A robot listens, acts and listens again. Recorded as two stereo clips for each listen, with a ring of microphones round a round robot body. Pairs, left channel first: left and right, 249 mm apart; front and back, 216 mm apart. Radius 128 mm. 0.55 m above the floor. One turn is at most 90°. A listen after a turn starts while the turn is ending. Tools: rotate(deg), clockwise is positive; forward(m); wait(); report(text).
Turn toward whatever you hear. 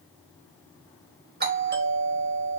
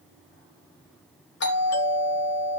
rotate(40)
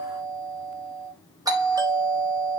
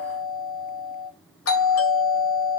rotate(15)
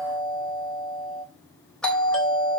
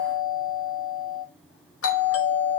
report("Facing the doorbell.")